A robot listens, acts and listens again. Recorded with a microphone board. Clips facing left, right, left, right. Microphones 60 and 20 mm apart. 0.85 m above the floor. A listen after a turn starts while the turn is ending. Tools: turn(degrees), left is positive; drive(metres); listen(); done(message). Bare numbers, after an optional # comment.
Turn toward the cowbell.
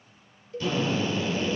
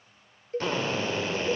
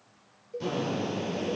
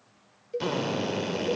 # The cowbell: about 40° right or 140° right.
turn(-40)
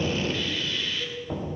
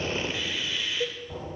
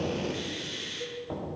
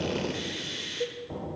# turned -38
# So it is at 95° right.
turn(-95)
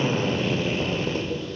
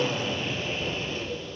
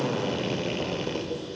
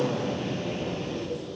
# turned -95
listen()
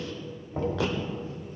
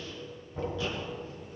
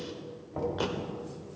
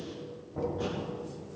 listen()
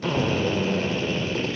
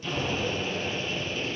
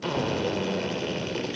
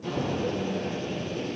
done("Facing where the cowbell came from. I can't hear it now.")